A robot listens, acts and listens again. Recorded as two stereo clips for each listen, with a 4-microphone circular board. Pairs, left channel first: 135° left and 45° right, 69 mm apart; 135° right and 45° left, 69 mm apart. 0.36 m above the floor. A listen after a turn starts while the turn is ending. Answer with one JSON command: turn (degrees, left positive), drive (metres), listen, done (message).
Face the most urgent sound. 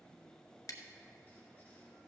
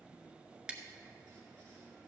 {"listen": true}
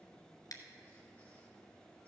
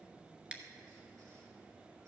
{"listen": true}
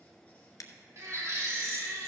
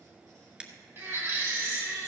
{"turn": -10}
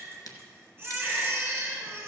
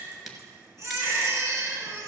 {"done": "Facing the baby crying, 2 to 4 m away."}